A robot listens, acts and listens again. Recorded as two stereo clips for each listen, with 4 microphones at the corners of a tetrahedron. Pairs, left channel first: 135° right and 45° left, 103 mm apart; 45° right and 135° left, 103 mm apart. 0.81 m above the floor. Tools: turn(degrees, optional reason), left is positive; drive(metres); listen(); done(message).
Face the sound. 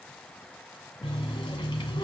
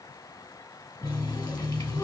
turn(degrees=-90, reason="The running tap: 90° right.")
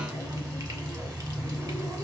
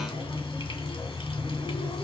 done("Facing the running tap, 2 to 4 m away.")